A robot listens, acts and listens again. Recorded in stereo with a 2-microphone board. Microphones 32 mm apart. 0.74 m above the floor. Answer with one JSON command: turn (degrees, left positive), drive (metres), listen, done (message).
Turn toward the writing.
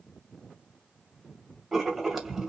{"turn": -30}
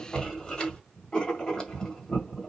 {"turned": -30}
{"turn": 25}
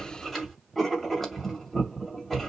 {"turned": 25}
{"done": "Facing the writing, 2 to 4 m away."}